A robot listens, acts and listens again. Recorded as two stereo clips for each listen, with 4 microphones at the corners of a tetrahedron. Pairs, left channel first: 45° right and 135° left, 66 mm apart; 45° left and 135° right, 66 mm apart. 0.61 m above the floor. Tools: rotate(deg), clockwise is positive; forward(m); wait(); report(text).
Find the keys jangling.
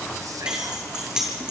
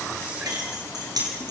rotate(145)
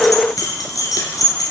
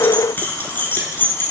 rotate(15)
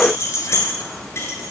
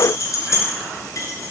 report("Facing the keys jangling, over 4 m away.")